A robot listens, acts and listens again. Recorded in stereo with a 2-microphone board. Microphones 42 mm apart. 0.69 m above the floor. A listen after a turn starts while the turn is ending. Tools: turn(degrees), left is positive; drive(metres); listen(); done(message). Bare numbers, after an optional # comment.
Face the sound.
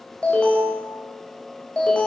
# The alarm: about 25° left or 155° left.
turn(25)
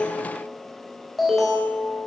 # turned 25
done("Found it: an alarm, straight ahead.")